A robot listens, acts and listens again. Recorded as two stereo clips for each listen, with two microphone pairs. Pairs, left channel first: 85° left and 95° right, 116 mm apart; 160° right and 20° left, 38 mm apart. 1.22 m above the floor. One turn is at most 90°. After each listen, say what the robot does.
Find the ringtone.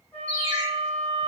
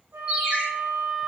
Turn 40° right.
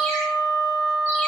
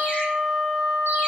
Keep listening.
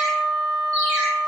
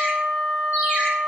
Keep listening.
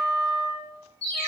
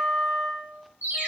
Found it: a ringtone, straight ahead.